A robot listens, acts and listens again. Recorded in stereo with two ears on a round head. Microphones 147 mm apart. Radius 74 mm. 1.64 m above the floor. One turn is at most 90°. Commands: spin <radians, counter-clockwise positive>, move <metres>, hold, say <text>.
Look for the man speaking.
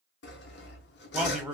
spin -0.52
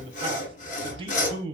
spin -1.57
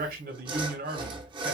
spin -1.05
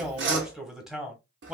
say Found it: a man speaking, straight ahead.